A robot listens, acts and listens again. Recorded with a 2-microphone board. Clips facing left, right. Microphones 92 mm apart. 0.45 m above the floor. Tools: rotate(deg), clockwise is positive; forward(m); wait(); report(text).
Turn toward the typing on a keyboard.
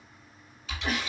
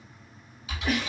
rotate(30)
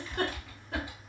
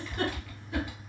rotate(-20)
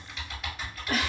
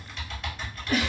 report("Found it: typing on a keyboard, straight ahead.")